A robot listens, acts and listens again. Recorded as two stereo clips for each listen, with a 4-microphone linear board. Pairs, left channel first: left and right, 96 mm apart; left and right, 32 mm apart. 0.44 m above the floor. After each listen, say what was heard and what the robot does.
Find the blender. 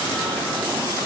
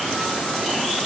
Keep listening.
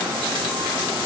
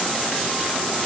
Keep listening.
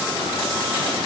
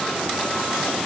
I can't make out a blender.